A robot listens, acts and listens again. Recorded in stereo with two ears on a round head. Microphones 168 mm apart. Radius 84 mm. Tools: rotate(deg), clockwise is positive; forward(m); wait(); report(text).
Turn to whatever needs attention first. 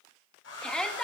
rotate(-30)
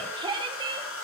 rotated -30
rotate(25)
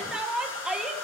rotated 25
report("Found it: a shout, straight ahead.")